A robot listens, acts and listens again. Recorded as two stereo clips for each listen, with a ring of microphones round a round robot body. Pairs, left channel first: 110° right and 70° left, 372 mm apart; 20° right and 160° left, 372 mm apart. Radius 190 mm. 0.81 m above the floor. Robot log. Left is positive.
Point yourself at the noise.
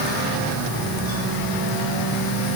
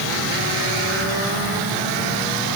cmd idle
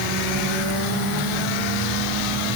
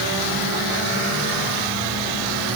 cmd idle
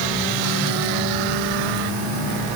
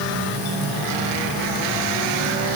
end: I can't make out anything to turn to.